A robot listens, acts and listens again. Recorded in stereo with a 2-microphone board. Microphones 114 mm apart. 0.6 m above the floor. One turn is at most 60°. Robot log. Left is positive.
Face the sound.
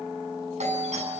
cmd yaw -60
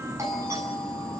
note: So it is at 30° right.
cmd yaw -30
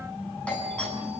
note: The doorbell is now 10° left.
cmd yaw +10
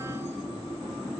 cmd idle
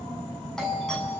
end: Facing the doorbell, over 4 m away.